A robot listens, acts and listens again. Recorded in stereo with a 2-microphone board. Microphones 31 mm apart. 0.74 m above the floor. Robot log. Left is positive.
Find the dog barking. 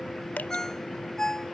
cmd idle
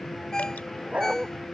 note: The dog barking: about 45° right or 135° right.
cmd yaw -45
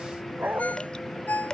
note: So it is at 85° right.
cmd yaw -85
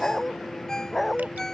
end: Found it: a dog barking, straight ahead.